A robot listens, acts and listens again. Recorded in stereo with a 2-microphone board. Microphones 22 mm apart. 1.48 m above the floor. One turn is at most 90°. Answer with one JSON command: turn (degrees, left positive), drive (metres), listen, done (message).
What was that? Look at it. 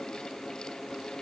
{"listen": true}
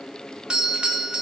{"turn": -45}
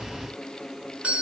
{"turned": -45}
{"turn": -85}
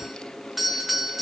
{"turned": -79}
{"turn": -10}
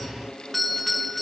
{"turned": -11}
{"done": "Facing the doorbell."}